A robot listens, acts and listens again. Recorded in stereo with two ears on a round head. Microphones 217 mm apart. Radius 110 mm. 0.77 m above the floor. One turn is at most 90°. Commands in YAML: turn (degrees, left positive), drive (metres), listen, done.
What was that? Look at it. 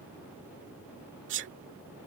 turn: -50
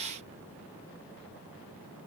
listen: true
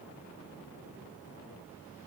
done: "I heard a sneeze, but can't make it out now. It was about straight ahead or 80° right."